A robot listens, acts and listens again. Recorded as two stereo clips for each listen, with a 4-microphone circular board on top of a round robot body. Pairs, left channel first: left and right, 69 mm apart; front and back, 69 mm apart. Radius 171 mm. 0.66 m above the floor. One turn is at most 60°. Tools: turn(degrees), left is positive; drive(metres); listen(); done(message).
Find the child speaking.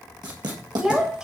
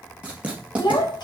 turn(degrees=-10)
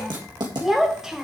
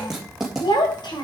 turn(degrees=-10)
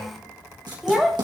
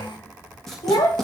done("Facing the child speaking, 2 to 4 m away.")